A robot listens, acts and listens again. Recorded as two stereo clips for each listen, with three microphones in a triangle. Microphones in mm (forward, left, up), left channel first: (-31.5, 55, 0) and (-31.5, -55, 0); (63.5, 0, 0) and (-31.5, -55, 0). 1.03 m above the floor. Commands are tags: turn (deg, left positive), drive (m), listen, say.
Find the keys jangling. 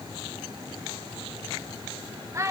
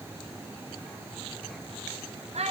<listen/>
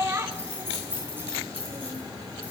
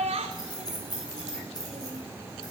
<turn deg="-15"/>
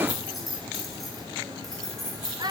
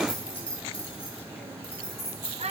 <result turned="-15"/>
<say>Facing the keys jangling.</say>